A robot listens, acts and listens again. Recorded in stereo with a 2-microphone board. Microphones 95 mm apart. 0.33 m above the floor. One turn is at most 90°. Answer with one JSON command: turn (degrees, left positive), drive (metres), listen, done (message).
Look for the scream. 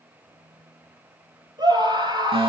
{"turn": -45}
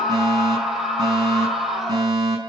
{"done": "Facing the scream, over 4 m away."}